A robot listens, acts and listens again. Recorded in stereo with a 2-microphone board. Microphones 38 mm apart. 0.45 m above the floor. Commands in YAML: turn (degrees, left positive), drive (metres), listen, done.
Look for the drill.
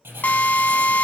turn: 45
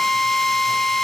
turn: 10
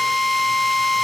done: "Found it: a drill, straight ahead, under 1 m away."